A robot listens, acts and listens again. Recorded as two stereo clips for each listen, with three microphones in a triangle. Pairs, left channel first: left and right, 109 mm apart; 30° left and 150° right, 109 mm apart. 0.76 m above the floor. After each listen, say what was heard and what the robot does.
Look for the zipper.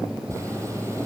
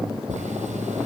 The zipper: 155° right. Turn 155° right.
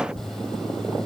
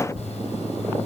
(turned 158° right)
Found it: a zipper, straight ahead, over 4 m away.